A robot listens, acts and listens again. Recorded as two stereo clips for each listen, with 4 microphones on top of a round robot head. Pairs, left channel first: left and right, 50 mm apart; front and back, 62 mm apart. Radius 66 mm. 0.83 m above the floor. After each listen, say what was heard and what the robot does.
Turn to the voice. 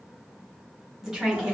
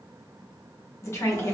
The woman speaking: 15° right. Turn 15° right.
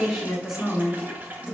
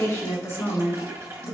The woman speaking is now 25° right. Turn 25° right.
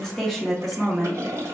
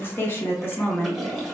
The woman speaking is now 10° right. Turn 10° right.
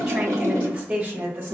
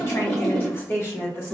The woman speaking is now 45° right. Turn 45° right.
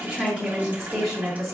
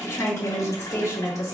Facing the woman speaking, 1 to 2 m away.